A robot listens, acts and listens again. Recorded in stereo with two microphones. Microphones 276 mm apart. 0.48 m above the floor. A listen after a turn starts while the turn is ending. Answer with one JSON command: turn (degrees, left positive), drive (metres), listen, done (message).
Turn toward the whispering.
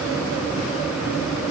{"listen": true}
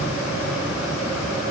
{"listen": true}
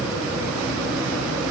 {"done": "I can't make out whispering."}